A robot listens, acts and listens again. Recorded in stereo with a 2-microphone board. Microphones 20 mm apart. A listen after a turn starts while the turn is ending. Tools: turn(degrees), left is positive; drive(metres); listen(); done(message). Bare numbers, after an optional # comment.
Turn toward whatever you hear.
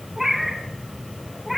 turn(-30)
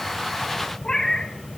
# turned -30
# So it is at 40° left.
turn(40)
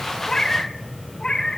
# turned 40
# The cat meowing is now 40° left.
turn(40)
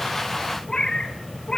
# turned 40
# The cat meowing is now 45° left.
turn(45)
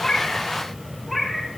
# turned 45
done("Facing the cat meowing.")